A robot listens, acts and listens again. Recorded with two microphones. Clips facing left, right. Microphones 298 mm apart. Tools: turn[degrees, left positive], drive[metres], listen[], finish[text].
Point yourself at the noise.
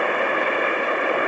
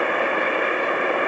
Action: listen[]
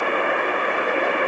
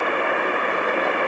Action: listen[]
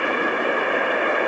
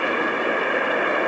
Action: finish[I can't make out anything to turn to.]